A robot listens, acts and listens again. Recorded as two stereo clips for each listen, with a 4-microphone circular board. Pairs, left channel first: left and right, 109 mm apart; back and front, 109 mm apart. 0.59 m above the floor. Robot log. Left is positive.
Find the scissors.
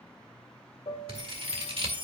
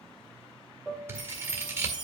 note: The scissors: 65° right.
cmd yaw -65
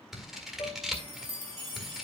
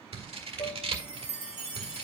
end: Found it: scissors, straight ahead, 1 to 2 m away.